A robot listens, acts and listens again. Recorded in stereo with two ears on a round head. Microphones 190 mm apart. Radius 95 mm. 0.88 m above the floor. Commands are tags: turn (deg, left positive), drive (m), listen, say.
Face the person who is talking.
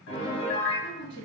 <turn deg="50"/>
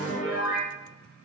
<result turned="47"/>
<listen/>
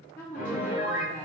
<turn deg="10"/>
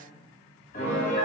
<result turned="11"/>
<listen/>
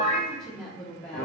<say>Facing the woman speaking.</say>